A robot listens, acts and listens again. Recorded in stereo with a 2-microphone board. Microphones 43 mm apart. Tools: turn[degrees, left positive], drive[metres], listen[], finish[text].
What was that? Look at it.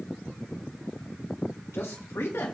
Action: turn[90]
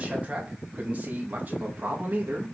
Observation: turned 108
Thought: So it is at 45° right.
Action: turn[-45]
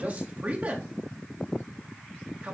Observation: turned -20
Thought: The man speaking is now 30° right.
Action: turn[-30]
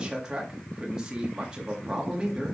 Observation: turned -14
Thought: The man speaking is now 15° right.
Action: turn[-15]
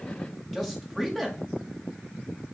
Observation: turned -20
Action: finish[Found it: a man speaking, straight ahead, 2 to 4 m away.]